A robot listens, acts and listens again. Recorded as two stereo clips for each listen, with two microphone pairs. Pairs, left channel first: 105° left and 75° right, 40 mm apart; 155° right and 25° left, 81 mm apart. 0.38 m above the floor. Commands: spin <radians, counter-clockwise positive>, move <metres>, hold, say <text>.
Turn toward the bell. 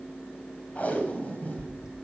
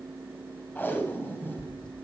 spin -2.62
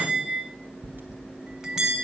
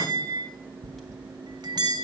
say Facing the bell, 1 to 2 m away.